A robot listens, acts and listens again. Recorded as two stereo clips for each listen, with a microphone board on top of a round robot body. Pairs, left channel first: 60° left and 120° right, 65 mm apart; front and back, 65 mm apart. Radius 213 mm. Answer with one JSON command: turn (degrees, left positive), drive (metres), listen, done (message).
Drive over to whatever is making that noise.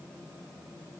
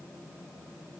{"listen": true}
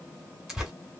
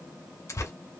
{"turn": -35}
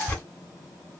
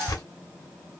{"drive": 1.0}
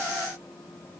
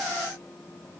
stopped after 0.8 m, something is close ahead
{"listen": true}
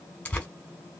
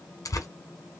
{"done": "Arrived at the tearing paper, straight ahead."}